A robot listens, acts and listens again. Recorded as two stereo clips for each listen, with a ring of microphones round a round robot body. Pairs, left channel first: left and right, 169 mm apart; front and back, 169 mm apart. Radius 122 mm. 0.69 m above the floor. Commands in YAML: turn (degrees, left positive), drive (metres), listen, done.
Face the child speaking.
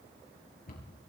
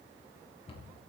listen: true
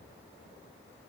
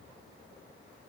listen: true
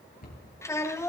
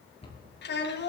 turn: 15
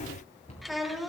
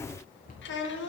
done: "Facing the child speaking, 2 to 4 m away."